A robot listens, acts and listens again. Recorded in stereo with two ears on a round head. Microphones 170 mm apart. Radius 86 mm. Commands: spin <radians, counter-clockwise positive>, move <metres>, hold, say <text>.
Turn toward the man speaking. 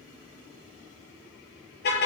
hold
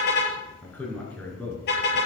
spin 0.52
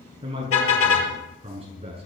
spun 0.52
spin -0.52
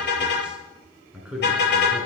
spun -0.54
say Found it: a man speaking, straight ahead, over 4 m away.